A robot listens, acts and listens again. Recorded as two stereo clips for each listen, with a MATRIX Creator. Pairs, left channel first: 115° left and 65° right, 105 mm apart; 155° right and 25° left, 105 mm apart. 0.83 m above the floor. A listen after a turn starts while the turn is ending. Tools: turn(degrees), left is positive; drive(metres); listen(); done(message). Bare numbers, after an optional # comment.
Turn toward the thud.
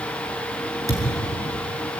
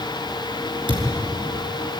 # The thud: 15° right.
turn(-15)
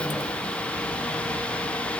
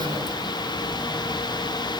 done("Facing where the thud came from. I can't hear it now.")